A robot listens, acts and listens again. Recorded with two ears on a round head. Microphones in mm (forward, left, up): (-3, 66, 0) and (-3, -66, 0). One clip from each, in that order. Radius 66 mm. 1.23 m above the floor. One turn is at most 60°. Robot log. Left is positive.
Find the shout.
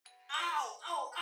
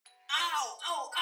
note: The shout: about 75° right or 105° right.
cmd yaw -60
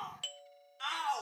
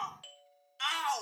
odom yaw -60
note: So it is at 45° right.
cmd yaw -45
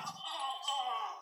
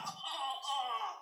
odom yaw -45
end: Facing the shout.